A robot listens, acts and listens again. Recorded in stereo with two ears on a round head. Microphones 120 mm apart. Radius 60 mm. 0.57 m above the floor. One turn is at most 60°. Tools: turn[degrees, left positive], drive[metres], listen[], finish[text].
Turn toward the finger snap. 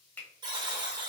Action: turn[30]
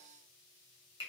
Thought: So it is at 140° left.
Action: turn[60]
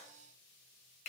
Thought: The finger snap is now 65° left.
Action: turn[60]
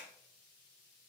Action: listen[]
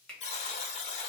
Action: finish[Found it: a finger snap, straight ahead, 1 to 2 m away.]